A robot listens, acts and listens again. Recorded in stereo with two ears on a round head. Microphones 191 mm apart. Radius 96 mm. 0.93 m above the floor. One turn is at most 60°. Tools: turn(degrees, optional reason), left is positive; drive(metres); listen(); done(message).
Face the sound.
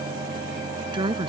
turn(degrees=-25, reason="The woman speaking: about 25° right or 155° right.")
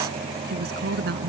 turn(degrees=-60, reason="So it is at 125° right.")
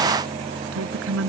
turn(degrees=-60, reason="The woman speaking is now 65° right.")
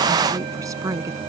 turn(degrees=-15, reason="The woman speaking is now 15° right.")
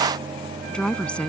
done("Found it: a woman speaking, straight ahead.")